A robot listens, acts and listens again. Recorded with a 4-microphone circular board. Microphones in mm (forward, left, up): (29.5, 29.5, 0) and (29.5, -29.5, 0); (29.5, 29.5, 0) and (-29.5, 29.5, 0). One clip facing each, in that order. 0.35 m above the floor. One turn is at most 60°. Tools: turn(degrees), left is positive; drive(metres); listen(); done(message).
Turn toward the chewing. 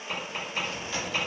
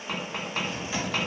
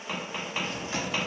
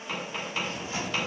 turn(degrees=-15)
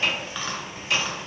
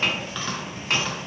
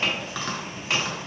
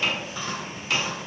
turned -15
done("Found it: chewing, straight ahead.")